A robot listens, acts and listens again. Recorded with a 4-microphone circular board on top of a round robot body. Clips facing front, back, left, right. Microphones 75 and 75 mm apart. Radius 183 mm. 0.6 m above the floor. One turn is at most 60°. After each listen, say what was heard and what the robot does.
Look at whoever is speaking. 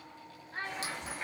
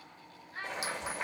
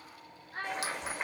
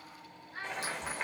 The child speaking: 50° left. Turn 50° left.
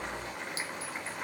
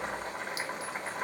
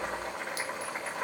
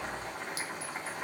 Keep listening.
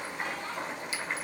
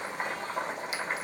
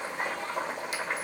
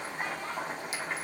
Keep listening.
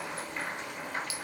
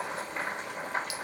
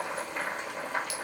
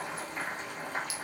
Facing where the child speaking came from. I can't hear it now.